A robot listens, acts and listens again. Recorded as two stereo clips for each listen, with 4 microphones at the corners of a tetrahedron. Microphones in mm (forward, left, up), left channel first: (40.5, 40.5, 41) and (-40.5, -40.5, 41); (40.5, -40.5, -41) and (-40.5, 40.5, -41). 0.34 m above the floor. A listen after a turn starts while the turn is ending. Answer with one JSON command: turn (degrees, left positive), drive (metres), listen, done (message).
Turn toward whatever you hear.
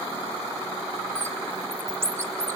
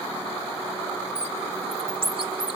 {"turn": 160}
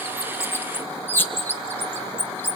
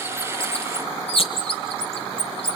{"turn": -25}
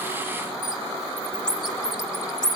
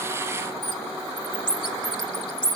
{"done": "Facing the bird."}